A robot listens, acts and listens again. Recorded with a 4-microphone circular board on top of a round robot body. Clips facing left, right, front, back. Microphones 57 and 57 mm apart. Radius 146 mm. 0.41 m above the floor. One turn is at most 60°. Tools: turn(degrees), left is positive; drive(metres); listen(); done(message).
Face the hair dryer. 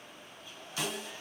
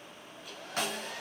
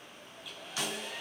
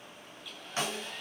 turn(degrees=-60)
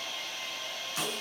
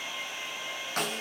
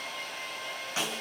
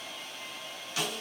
turn(degrees=-20)
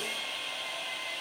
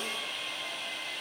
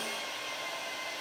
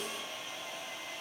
done("Facing the hair dryer, 2 to 4 m away.")